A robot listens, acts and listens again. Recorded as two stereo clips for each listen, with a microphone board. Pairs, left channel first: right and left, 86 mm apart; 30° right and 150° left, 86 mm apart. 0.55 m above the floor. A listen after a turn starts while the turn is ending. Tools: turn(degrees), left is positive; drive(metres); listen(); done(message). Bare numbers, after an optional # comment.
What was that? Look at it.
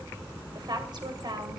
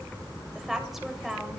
# The woman speaking: 65° left.
turn(65)
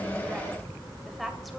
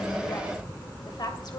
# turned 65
done("Found it: a woman speaking, straight ahead, 2 to 4 m away.")